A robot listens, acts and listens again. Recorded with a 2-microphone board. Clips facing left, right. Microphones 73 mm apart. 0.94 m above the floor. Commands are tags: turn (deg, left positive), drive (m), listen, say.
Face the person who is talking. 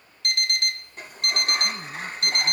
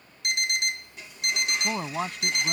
<turn deg="-75"/>
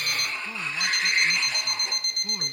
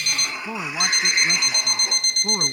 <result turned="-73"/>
<turn deg="-40"/>
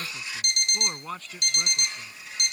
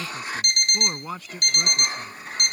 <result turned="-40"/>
<say>Found it: a man speaking, straight ahead.</say>